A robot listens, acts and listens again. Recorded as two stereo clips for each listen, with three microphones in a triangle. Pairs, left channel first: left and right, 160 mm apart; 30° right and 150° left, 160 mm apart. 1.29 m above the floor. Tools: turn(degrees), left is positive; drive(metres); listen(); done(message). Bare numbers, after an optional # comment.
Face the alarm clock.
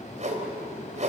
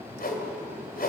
listen()
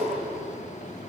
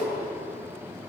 listen()
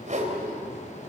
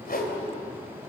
done("I can't make out an alarm clock, only a whoosh.")